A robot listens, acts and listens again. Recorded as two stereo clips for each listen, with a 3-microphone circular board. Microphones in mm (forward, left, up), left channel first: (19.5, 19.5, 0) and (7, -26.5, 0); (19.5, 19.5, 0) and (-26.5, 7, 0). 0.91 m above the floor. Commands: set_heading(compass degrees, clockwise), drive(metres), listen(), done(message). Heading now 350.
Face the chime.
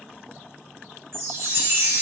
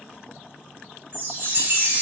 set_heading(110)
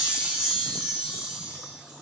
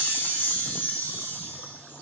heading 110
set_heading(135)
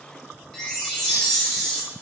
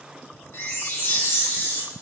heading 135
done("Facing the chime, 1 to 2 m away.")